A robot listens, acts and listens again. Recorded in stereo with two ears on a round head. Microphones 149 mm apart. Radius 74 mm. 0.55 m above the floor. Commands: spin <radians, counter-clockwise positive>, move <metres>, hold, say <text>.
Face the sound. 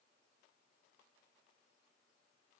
hold
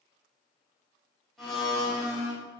spin 0.52
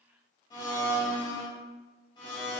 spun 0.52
spin 2.62
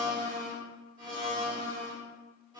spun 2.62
spin -0.52
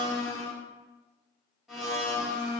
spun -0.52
say Found it: a blender, straight ahead.